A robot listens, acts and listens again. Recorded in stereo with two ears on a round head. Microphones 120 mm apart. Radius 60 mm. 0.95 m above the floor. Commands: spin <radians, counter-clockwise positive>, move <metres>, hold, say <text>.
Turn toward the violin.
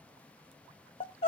hold
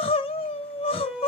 spin 0.52
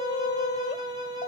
spin -0.52
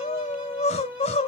spin -0.17
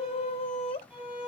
say Found it: a violin, straight ahead.